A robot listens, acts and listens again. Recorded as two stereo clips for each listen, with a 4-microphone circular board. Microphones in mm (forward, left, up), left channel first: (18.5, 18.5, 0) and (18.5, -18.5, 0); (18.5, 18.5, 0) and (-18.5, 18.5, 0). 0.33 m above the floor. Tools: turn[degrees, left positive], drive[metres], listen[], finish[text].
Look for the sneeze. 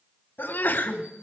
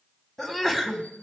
Thought: The sneeze: 85° left.
Action: turn[85]
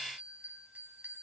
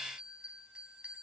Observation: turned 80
Action: finish[I heard a sneeze from this way, but can't make it out now.]